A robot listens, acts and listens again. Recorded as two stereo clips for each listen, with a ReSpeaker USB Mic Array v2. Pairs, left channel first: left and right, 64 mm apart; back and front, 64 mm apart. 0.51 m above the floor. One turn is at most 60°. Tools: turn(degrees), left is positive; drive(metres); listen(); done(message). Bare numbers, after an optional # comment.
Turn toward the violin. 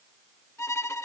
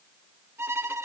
# The violin: 45° left.
turn(45)
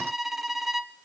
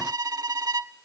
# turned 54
done("Facing the violin, under 1 m away.")